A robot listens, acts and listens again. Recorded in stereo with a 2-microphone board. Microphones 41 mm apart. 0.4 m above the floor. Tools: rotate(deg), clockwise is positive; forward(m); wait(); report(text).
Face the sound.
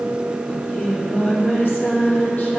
rotate(-45)
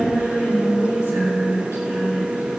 rotate(-90)
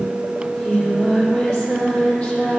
rotate(-30)
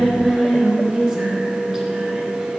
report("Found it: singing, straight ahead.")